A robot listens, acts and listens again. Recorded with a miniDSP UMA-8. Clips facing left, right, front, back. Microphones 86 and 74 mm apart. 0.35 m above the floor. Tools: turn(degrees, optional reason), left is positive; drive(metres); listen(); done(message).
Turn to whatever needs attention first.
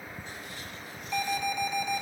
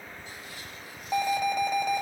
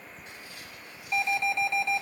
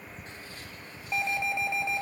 turn(degrees=-110, reason="The alarm: 110° right.")
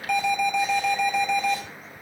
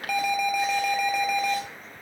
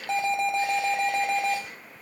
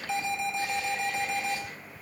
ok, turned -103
done("Found it: an alarm, straight ahead, 2 to 4 m away.")